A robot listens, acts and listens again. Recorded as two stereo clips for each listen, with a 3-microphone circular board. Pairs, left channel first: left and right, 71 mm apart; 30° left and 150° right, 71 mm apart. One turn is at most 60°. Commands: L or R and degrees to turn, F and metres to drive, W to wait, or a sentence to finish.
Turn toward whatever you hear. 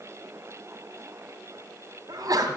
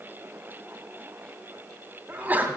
R60
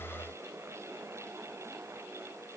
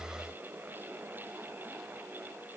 R30
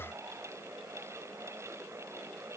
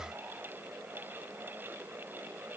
I heard a sneeze from this way, but can't make it out now.